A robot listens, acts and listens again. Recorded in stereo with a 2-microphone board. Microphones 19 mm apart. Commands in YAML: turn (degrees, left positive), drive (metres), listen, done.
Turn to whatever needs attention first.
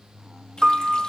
listen: true
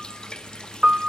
listen: true
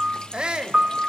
turn: -50
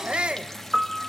turn: -75
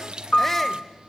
listen: true
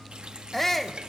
turn: 15
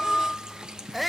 done: "Facing the shout."